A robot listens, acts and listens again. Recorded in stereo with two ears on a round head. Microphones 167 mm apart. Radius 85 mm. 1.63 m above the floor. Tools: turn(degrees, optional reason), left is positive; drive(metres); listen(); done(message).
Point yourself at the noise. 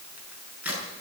turn(degrees=-30)
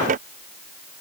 listen()
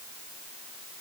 done("I heard a crack, but can't make it out now. It was about 25° left or 145° right.")